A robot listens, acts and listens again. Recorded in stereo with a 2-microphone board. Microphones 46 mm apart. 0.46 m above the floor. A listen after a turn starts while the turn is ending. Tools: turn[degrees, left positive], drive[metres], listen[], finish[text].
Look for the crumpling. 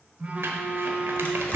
Thought: The crumpling: about 65° right or 115° right.
Action: turn[-65]
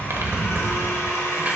Thought: So it is at 35° right.
Action: turn[-35]
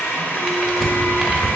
Action: finish[Found it: crumpling, straight ahead, under 1 m away.]